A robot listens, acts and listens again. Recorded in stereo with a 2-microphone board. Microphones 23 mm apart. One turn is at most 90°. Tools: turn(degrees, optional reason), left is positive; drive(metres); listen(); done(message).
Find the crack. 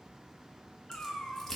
turn(degrees=20, reason="The crack: about 20° left or 160° left.")
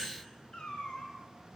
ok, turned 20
listen()
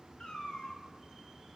done("I heard a crack, but can't make it out now. It was about straight ahead or 140° left.")